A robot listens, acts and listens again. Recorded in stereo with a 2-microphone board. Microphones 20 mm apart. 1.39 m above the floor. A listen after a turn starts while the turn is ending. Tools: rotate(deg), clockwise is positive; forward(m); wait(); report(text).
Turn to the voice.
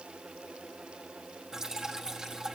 wait()
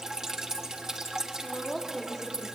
rotate(-20)
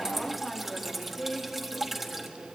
rotate(-30)
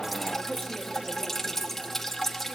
report("Facing the woman speaking, 2 to 4 m away.")